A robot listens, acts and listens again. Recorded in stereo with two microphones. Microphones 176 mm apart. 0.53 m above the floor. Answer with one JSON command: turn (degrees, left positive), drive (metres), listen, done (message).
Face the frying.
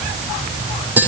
{"listen": true}
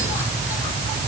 {"listen": true}
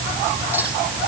{"done": "I can't make out frying to turn to."}